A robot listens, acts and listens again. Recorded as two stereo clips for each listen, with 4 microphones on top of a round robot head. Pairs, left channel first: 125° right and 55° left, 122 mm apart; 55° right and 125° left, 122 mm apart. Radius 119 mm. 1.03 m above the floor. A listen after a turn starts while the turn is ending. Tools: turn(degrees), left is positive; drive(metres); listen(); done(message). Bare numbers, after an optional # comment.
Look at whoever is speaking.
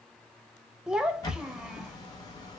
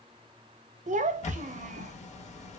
# The child speaking: 135° left.
turn(135)
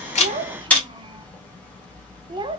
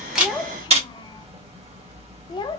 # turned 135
done("Facing the child speaking, under 1 m away.")